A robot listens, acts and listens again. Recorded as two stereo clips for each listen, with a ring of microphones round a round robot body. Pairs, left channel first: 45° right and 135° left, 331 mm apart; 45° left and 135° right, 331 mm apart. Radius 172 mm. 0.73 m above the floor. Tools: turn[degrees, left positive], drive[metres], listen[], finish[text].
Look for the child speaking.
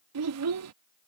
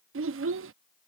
Thought: The child speaking: 175° left.
Action: turn[175]
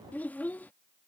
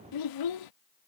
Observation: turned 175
Thought: The child speaking is now 40° left.
Action: turn[40]
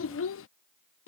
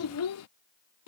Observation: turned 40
Action: finish[Found it: a child speaking, straight ahead.]